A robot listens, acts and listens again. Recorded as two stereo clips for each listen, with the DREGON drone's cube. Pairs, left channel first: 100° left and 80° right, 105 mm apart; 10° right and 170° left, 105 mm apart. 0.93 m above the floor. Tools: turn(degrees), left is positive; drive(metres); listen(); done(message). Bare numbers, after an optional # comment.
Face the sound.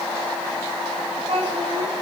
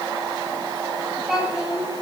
# The child speaking: 105° right.
turn(-105)
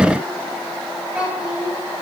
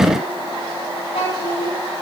done("Found it: a child speaking, straight ahead, over 4 m away.")